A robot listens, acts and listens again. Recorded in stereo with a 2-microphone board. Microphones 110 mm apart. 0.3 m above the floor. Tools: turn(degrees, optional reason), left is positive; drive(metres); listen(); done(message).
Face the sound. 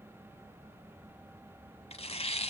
turn(degrees=65, reason="The tearing paper: about 65° left or 115° left.")
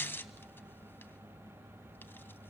turn(degrees=20, reason="So it is at 20° left.")
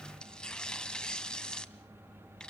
turn(degrees=10, reason="The tearing paper is now 10° left.")
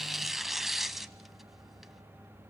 done("Facing the tearing paper, under 1 m away.")